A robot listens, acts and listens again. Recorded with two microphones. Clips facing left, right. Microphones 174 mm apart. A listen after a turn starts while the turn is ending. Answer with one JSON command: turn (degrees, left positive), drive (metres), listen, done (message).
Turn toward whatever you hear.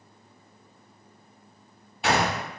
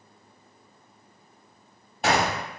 {"turn": -40}
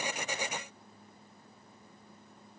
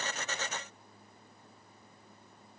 {"listen": true}
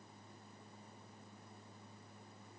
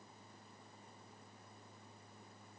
{"done": "I heard a gunshot, but can't make it out now. It was about straight ahead or 100° right."}